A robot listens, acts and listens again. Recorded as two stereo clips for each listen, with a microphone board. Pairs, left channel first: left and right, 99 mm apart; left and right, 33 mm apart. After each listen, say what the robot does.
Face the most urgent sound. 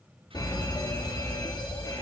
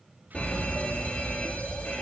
Turn 45° left.
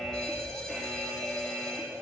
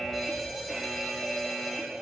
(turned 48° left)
Found it: a fire alarm, straight ahead.